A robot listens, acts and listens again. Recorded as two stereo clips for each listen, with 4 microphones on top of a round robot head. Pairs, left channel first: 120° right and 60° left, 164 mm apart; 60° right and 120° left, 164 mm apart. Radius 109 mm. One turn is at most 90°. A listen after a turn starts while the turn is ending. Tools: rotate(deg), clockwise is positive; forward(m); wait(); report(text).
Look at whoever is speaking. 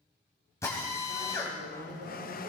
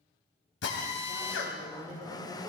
rotate(-70)
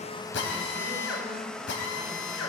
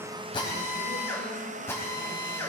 wait()
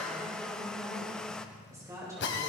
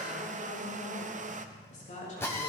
rotate(15)
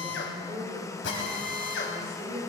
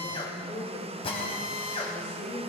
report("Found it: a woman speaking, straight ahead.")